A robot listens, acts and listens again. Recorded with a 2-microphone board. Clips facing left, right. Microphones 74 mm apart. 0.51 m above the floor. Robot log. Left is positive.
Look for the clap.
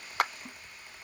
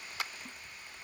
note: The clap: about 55° left or 125° left.
cmd yaw +55
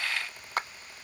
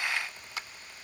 note: So it is at 55° left.
cmd yaw +55
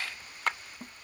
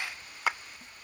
end: Facing the clap.